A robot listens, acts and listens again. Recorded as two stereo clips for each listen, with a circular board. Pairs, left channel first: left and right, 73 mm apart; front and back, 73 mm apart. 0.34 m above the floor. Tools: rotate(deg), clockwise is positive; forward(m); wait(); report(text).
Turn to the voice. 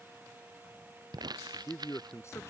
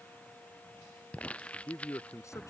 rotate(-45)
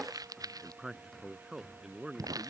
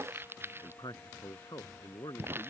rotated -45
report("Facing the man speaking.")